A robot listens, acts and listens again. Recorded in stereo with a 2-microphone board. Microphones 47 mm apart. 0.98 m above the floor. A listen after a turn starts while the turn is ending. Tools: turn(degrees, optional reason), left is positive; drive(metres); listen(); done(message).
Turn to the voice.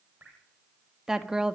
turn(degrees=-15, reason="The woman speaking: about 15° right or 165° right.")
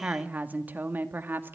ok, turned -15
turn(degrees=-135, reason="So it is at 135° right.")
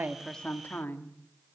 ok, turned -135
turn(degrees=45, reason="The woman speaking is now 45° left.")
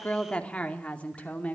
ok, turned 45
turn(degrees=30, reason="The woman speaking is now 30° left.")
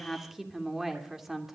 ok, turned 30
done("Facing the woman speaking.")